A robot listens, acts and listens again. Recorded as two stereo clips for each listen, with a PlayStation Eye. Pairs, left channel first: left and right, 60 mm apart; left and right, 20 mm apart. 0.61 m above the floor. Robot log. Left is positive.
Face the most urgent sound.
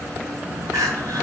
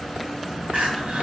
cmd yaw -90
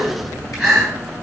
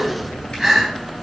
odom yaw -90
end: Facing the crying, 1 to 2 m away.